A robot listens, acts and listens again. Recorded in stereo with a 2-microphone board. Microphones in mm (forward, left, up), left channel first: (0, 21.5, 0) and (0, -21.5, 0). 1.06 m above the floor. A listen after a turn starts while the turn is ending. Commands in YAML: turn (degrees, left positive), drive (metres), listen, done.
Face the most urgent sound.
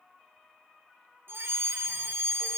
turn: -60
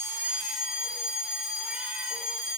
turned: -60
done: "Found it: a fire alarm, straight ahead, over 4 m away."